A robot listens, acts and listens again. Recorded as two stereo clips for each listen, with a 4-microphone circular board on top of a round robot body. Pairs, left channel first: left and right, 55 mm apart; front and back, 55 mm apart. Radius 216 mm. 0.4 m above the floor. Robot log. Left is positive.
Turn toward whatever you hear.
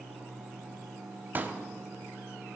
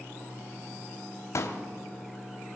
note: The pop: 30° right.
cmd yaw -30
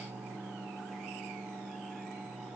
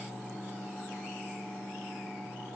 end: I heard a pop from this way, but can't make it out now.